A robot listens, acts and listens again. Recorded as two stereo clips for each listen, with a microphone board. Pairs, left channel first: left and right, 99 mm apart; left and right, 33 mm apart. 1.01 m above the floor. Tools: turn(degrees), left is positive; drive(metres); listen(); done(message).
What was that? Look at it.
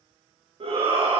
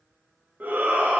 turn(degrees=-70)
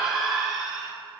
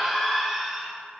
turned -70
done("Facing the shout, 1 to 2 m away.")